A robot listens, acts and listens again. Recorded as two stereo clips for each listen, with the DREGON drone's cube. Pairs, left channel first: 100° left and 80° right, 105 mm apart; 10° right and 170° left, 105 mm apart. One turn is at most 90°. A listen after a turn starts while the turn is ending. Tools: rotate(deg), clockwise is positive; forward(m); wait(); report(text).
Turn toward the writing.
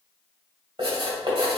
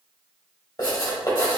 rotate(55)
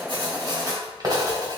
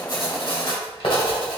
rotate(30)
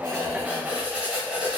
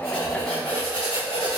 report("Found it: writing, straight ahead.")